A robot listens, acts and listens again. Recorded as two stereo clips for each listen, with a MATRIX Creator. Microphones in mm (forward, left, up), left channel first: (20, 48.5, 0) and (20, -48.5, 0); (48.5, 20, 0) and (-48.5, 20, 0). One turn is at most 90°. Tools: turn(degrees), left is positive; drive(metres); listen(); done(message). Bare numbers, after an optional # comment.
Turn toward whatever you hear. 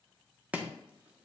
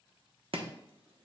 # The chopping: 165° right.
turn(-90)
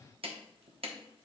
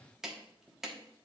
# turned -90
# The chopping is now 95° right.
turn(-90)
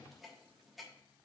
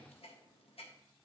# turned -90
listen()
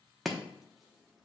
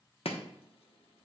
done("Facing the chopping.")